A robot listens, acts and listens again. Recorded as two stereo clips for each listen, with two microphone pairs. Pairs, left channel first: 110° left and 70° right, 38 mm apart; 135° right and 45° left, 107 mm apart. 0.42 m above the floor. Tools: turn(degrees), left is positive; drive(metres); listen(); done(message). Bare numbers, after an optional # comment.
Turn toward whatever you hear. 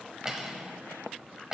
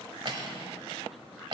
done("Found it: cutlery clinking, straight ahead.")